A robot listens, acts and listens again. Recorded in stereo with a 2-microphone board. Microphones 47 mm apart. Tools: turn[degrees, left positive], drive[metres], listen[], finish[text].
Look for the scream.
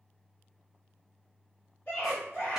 Thought: The scream: about 40° left or 140° left.
Action: turn[40]
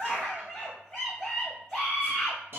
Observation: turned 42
Action: finish[Found it: a scream, straight ahead.]